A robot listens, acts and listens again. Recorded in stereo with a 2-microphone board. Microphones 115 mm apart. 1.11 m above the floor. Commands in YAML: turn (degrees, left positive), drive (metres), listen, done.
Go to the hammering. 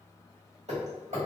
turn: -70
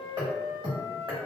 turn: -40
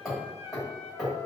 drive: 1.0
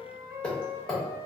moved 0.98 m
turn: 10
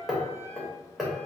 drive: 1.0
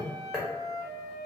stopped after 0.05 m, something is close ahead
done: "I am next to the hammering."